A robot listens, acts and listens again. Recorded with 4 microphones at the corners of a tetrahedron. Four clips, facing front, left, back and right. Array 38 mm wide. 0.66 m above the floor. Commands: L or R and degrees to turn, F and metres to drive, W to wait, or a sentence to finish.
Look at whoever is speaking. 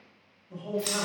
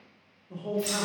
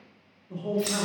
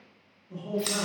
L145
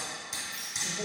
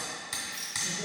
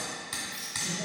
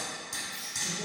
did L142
W
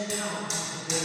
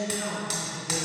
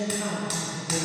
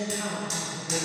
Found it: a man speaking, straight ahead, 1 to 2 m away.